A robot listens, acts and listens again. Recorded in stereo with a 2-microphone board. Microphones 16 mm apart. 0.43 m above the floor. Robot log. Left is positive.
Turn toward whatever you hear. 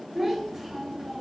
note: The child speaking: about 15° right or 165° right.
cmd yaw -15
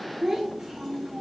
note: The child speaking: about 40° right or 140° right.
cmd yaw -40
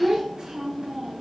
note: So it is at 110° right.
cmd yaw -110
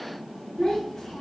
note: The child speaking is now 50° left.
cmd yaw +50
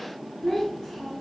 end: Facing the child speaking.